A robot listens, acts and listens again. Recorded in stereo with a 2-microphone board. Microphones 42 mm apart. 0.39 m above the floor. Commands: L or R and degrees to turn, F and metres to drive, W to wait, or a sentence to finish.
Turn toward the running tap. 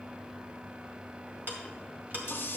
L55
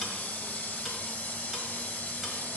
L50
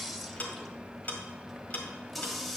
Facing the running tap, under 1 m away.